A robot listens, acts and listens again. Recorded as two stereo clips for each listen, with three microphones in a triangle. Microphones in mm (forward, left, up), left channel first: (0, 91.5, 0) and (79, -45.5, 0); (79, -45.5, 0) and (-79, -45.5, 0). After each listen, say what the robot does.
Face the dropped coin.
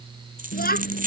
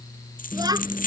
Turn 30° right.
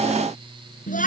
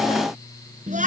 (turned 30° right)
I heard a dropped coin from this way, but can't make it out now.